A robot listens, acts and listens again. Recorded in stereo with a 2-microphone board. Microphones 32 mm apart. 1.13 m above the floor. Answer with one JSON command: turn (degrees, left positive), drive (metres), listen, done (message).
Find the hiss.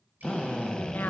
{"listen": true}
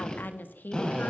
{"listen": true}
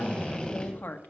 {"done": "I can't make out a hiss to turn to."}